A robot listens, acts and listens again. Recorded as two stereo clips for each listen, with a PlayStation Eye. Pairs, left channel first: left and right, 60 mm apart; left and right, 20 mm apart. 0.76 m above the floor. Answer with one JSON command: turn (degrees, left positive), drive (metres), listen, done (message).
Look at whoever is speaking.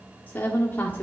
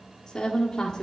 {"turn": 30}
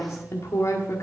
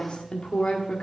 {"turn": 120}
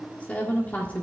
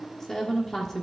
{"turn": 25}
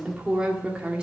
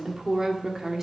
{"turn": -20}
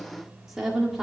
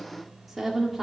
{"done": "Found it: a woman speaking, straight ahead."}